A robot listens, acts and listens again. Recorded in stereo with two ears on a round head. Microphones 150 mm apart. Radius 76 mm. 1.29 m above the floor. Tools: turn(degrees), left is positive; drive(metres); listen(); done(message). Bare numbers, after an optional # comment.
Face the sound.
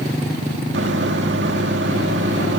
turn(-90)
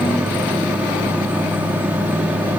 # So it is at 10° right.
turn(-10)
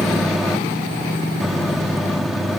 done("Found it: a microwave, straight ahead.")